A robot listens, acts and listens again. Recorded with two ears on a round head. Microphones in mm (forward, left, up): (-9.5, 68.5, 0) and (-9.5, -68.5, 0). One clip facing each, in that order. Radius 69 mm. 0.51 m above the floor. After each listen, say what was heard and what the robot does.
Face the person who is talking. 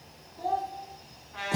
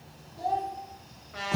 The child speaking: about 25° right or 155° right. Turn 25° right.
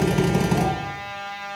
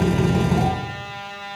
Keep listening.
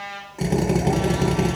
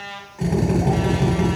Keep listening.
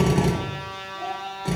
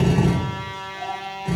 I heard a child speaking, but can't make it out now. It was about straight ahead or 130° right.